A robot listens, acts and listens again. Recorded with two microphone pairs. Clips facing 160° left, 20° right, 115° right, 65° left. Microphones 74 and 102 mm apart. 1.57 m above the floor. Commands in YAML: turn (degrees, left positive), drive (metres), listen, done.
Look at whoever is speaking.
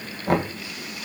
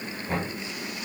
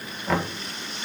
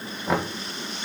listen: true
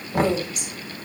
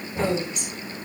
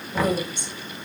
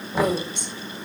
turn: 75
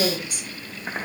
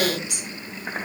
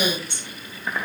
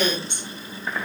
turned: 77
done: "Found it: a woman speaking, straight ahead."